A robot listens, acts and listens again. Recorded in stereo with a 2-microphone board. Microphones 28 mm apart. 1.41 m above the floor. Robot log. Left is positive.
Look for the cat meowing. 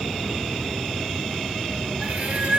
note: The cat meowing: about 60° right or 120° right.
cmd yaw -60
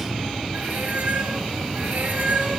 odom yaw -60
note: So it is at 65° right.
cmd yaw -65
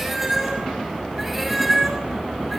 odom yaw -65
end: Facing the cat meowing.